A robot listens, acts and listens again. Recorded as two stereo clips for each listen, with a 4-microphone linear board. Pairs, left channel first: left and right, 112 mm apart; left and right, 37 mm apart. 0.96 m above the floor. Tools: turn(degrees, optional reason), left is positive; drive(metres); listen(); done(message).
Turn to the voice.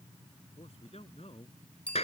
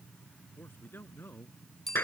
turn(degrees=70, reason="The man speaking: about 70° left or 110° left.")
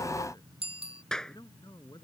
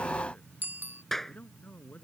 turn(degrees=40, reason="So it is at 40° left.")
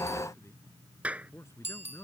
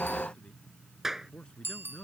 turn(degrees=25, reason="The man speaking is now 25° left.")
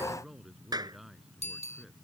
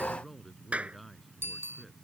done("Facing the man speaking.")